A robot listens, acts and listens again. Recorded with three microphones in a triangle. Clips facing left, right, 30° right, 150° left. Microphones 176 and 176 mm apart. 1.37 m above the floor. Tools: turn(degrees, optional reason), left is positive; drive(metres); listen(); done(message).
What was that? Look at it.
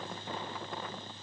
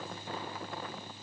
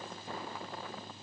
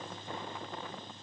listen()
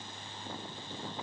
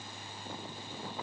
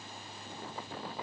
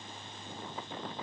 listen()
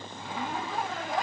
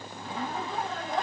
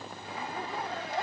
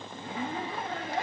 turn(degrees=175, reason="The zipper: 175° left.")
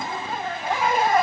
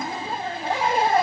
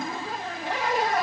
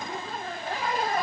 turn(degrees=-30, reason="The zipper is now 30° right.")
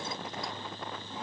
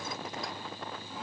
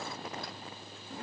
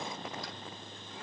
listen()
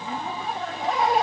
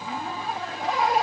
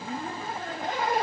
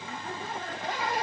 done("Found it: a zipper, straight ahead, 2 to 4 m away.")